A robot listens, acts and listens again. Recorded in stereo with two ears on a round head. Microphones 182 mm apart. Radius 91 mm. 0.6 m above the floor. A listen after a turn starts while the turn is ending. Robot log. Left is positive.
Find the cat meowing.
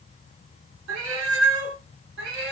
note: The cat meowing: about 55° right or 125° right.
cmd yaw -55
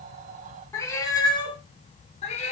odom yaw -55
note: So it is at 35° left.
cmd yaw +35
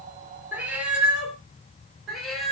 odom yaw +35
end: Found it: a cat meowing, straight ahead, 2 to 4 m away.